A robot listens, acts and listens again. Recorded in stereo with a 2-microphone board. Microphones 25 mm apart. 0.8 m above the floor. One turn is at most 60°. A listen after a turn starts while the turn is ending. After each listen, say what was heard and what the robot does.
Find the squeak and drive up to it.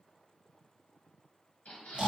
The squeak: about 65° left or 115° left. Turn 60° left.
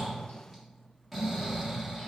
Keep listening.
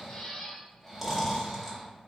So it is at 50° left. Turn 50° left.
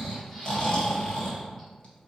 Keep listening.
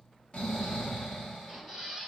Drive 1.0 m forward.
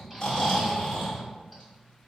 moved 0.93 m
Keep listening.
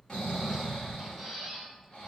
Drive 1.0 m forward.
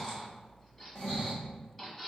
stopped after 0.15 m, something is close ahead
The squeak is now 10° left. Turn 10° left.
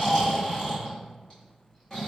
Keep listening.
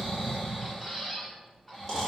Arrived at the squeak, straight ahead.